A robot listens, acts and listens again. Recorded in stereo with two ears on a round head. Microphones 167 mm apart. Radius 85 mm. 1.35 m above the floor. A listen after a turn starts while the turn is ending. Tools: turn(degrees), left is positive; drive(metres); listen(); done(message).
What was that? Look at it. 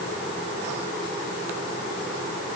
listen()
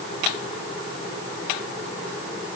listen()
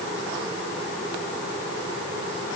done("I can't make out anything to turn to.")